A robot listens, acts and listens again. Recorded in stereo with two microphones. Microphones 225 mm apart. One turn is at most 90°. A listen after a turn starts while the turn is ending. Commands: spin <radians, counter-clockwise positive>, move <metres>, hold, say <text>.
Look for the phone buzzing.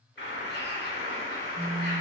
spin -0.70
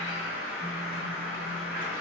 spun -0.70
hold
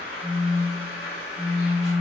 spin -1.57
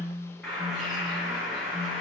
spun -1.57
spin -0.35
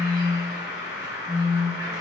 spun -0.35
say Found it: a phone buzzing, straight ahead.